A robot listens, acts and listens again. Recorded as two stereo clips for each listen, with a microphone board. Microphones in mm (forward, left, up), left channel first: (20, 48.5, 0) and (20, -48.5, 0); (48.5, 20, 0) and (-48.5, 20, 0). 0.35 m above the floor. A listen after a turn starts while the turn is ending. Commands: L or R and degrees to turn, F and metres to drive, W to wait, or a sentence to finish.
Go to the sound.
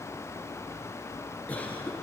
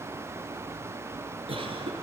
L165
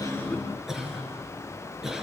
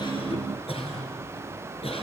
F1.0
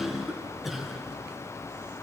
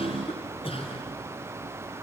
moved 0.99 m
F1.0
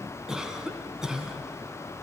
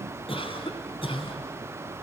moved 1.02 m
F1.0
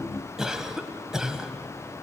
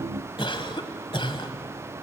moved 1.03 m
F1.0
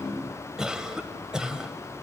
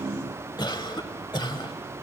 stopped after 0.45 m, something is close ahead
R10
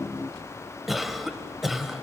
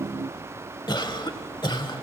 Arrived at the cough, straight ahead.